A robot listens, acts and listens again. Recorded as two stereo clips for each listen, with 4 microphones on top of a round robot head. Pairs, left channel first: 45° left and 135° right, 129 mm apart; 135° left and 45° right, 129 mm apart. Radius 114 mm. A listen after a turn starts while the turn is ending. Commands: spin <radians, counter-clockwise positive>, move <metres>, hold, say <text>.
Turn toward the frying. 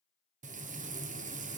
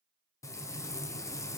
spin -2.79
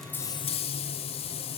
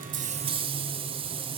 say Found it: frying, straight ahead.